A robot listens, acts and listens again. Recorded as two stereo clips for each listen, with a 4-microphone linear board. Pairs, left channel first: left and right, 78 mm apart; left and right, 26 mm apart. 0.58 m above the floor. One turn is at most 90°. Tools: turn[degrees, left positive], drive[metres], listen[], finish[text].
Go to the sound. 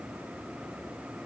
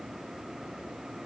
Action: listen[]
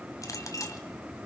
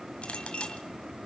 Thought: The clink: about 45° left or 135° left.
Action: turn[45]
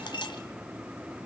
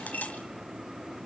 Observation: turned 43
Thought: So it is at 90° left.
Action: turn[90]
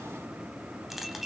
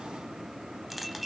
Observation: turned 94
Action: drive[1.0]
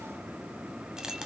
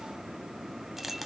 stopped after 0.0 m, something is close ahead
Thought: The clink is now 10° right.
Action: turn[-10]
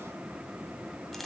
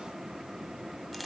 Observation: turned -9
Action: finish[Blocked. The clink is further on, straight ahead.]